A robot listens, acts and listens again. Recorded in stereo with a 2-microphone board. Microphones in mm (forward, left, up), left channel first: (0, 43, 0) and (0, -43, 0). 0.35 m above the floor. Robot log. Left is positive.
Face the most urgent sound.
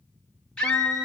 cmd yaw +30
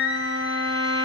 note: So it is at 15° right.
cmd yaw -15
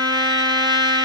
cmd idle
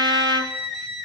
end: Facing the scream, 2 to 4 m away.